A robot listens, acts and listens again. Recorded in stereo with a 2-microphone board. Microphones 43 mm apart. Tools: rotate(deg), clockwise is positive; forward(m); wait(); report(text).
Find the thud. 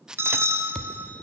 rotate(-20)
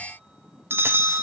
wait()
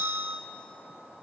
report("I heard a thud, but can't make it out now. It was about straight ahead or 140° left.")